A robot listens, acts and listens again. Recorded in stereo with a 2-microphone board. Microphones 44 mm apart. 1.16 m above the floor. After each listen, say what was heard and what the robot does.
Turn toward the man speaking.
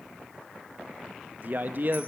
The man speaking: about 50° right or 130° right. Turn 50° right.
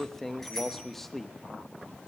Found it: a man speaking, straight ahead, 1 to 2 m away.